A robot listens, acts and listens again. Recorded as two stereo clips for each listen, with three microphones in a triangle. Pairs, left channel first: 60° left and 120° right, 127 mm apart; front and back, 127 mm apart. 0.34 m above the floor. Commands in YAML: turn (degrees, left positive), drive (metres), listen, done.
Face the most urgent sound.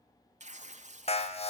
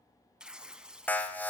turn: 75
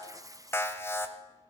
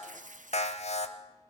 done: "Facing the alarm, 1 to 2 m away."